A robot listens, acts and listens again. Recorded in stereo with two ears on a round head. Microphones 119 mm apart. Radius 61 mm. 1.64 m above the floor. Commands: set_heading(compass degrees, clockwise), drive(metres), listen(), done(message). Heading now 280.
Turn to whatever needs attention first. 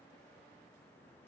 listen()
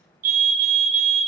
set_heading(340)
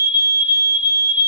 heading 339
set_heading(354)
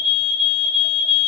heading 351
done("Found it: a fire alarm, straight ahead.")